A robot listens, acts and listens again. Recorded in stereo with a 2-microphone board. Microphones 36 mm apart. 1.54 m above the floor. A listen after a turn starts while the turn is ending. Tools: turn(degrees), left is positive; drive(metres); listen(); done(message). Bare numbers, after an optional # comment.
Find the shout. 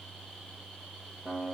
listen()
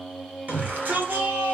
# The shout: about 50° right or 130° right.
turn(-50)
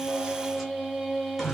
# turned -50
done("Facing the shout.")